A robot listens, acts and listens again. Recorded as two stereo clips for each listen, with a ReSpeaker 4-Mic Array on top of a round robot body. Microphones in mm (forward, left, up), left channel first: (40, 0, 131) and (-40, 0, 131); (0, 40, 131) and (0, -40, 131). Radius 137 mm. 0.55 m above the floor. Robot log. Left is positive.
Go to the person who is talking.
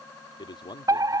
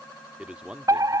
note: The man speaking: 10° right.
cmd yaw -10
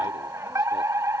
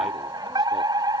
cmd idle
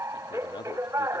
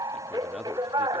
cmd idle
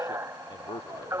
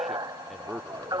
cmd fwd 1.0
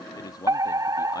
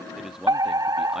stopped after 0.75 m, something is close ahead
note: The man speaking is now 10° right.
cmd yaw -10
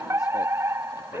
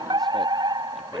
cmd idle
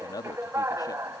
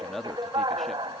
end: Arrived at the man speaking, straight ahead.